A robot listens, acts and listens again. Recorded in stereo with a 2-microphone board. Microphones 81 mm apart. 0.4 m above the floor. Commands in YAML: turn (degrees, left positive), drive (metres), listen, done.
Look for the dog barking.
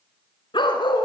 turn: 75
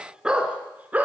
turn: -20
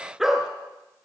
done: "Found it: a dog barking, straight ahead."